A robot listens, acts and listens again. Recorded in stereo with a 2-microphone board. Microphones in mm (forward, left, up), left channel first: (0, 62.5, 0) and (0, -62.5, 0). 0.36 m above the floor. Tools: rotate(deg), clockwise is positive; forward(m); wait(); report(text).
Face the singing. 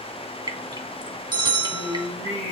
rotate(70)
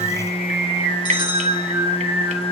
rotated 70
rotate(35)
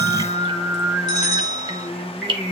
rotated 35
report("Found it: singing, straight ahead.")